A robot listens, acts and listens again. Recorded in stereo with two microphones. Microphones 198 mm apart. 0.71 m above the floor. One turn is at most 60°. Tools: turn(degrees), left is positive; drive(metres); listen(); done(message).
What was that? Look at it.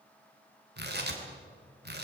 turn(degrees=-55)
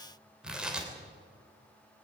done("Facing the tearing paper, 2 to 4 m away.")